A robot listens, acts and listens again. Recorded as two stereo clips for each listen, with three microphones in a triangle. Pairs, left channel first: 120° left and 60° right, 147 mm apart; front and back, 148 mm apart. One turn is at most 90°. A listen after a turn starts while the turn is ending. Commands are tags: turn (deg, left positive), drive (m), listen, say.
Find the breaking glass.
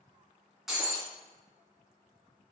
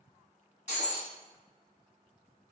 <turn deg="25"/>
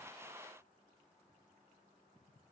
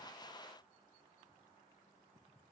<say>I heard breaking glass from this way, but can't make it out now.</say>